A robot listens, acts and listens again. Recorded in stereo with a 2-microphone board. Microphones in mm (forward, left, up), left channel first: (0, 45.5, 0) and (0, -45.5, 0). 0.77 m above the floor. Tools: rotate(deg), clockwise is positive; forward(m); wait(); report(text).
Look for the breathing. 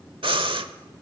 rotate(70)
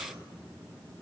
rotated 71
wait()
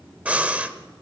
rotate(20)
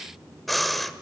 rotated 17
report("Found it: breathing, straight ahead.")